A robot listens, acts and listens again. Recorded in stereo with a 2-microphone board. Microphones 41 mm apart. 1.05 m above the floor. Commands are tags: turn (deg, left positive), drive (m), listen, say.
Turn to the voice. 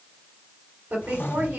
<turn deg="-40"/>
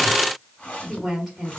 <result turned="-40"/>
<say>Found it: a woman speaking, straight ahead, 2 to 4 m away.</say>